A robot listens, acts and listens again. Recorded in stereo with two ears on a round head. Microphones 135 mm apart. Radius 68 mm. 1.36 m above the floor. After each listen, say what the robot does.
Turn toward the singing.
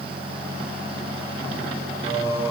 Turn 25° right.
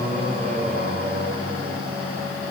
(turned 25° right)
Turn 125° right.
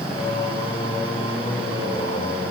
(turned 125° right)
Turn 30° left.
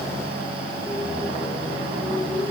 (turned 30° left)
Facing the singing, over 4 m away.